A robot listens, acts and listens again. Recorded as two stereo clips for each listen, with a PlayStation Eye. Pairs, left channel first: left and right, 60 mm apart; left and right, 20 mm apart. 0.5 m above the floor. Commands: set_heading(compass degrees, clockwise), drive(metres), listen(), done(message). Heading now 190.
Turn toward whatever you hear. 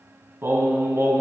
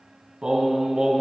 set_heading(235)
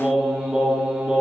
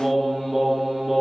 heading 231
set_heading(251)
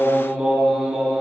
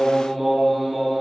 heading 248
set_heading(258)
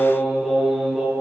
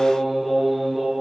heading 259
set_heading(269)
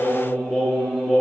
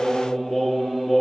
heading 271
done("Facing the singing, over 4 m away.")